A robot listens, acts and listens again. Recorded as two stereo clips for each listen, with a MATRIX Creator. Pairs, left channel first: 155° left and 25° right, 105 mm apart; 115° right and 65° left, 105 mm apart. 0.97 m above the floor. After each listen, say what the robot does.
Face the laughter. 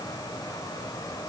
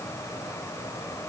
Keep listening.
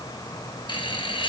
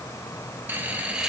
Turn 150° left.
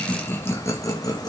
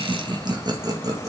Turn 115° left.
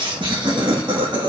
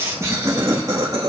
Turn 20° left.
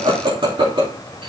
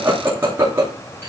Facing the laughter, 2 to 4 m away.